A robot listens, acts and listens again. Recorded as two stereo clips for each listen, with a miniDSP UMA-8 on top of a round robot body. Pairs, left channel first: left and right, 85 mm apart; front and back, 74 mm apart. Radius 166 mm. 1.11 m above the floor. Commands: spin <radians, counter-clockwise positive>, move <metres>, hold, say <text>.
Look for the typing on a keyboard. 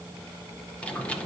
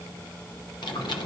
spin 0.26
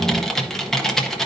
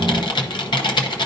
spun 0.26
say Found it: typing on a keyboard, straight ahead, under 1 m away.